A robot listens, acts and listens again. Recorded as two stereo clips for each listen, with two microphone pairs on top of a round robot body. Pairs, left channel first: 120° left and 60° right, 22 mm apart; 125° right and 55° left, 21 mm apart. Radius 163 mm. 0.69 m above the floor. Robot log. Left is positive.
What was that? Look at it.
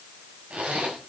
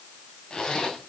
note: The zipper: 75° right.
cmd yaw -75
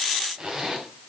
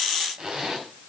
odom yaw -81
end: Facing the zipper.